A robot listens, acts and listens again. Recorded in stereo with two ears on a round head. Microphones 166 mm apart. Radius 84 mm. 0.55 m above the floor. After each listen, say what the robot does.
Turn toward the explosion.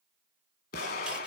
Turn 50° left.
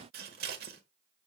Keep listening.
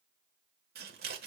I heard an explosion, but can't make it out now. It was about straight ahead or 80° left.